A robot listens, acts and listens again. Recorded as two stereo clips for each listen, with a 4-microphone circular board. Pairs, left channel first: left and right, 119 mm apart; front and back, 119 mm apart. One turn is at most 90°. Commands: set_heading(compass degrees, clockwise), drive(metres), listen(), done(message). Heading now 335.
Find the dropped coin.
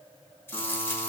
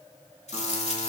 set_heading(315)
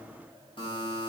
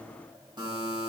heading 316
done("I heard a dropped coin from this way, but can't make it out now.")